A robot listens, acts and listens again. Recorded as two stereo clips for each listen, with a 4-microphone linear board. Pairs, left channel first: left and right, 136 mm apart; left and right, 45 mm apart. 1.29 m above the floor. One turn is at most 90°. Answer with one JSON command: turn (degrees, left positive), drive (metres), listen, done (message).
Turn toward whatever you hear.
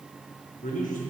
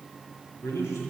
{"turn": 90}
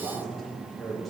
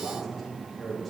{"done": "Facing the man speaking, over 4 m away."}